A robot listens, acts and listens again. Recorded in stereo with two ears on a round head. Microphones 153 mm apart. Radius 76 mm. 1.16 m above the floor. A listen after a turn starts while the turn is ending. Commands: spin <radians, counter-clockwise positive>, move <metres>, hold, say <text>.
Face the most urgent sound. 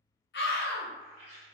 spin 1.22
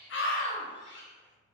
spin 0.70
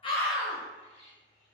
hold
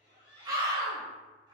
spin -0.35
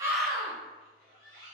say Facing the scream, under 1 m away.